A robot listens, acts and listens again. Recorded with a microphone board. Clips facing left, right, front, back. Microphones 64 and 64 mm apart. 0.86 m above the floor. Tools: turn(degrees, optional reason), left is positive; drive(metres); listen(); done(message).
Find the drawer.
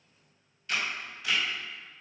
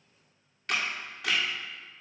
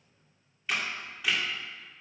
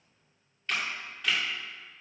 listen()
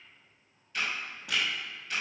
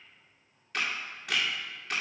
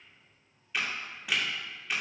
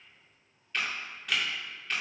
listen()
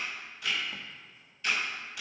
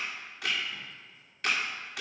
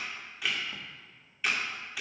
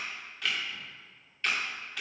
done("I can't make out a drawer, only a camera shutter.")